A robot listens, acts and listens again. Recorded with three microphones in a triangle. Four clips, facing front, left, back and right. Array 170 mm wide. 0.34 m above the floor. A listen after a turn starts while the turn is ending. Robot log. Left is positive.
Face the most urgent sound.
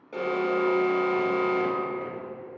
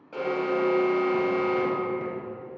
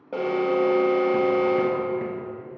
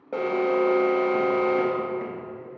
note: The alarm: 130° right.
cmd yaw -130
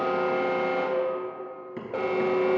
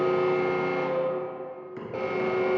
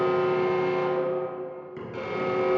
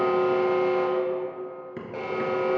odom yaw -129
end: Facing the alarm, 1 to 2 m away.